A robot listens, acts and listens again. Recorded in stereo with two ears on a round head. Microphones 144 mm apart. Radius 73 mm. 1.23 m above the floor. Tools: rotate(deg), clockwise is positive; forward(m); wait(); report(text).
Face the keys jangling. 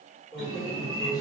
rotate(-45)
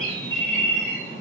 wait()
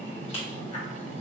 rotate(-40)
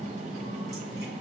wait()
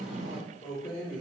rotate(-30)
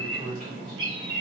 report("Facing the keys jangling.")